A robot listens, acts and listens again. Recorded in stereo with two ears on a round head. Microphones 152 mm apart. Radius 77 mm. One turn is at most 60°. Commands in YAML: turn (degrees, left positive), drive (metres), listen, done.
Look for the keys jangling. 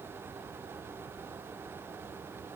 listen: true
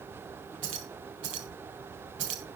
turn: -60
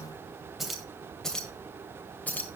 turn: 10
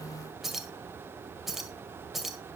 done: "Found it: keys jangling, straight ahead."